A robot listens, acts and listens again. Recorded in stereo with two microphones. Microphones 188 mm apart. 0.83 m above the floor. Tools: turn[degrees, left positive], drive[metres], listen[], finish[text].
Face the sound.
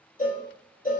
Thought: The cowbell: about 50° left or 130° left.
Action: turn[50]
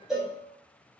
Action: finish[Facing the cowbell.]